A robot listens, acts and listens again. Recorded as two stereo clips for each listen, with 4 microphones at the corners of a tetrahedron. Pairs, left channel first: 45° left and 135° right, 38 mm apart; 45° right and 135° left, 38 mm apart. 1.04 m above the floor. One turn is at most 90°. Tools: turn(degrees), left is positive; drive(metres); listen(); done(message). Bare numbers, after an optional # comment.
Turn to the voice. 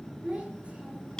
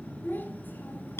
# The child speaking: 80° right.
turn(-80)
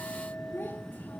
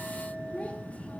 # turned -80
# The child speaking is now 15° left.
turn(15)
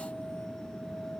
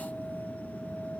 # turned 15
listen()
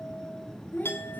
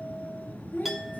done("Facing the child speaking.")